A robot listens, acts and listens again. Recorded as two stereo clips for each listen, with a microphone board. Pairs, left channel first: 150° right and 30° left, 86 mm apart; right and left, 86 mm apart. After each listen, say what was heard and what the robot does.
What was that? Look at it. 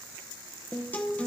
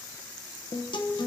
The guitar: 80° right. Turn 80° right.
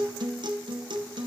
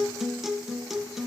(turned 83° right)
Facing the guitar, 1 to 2 m away.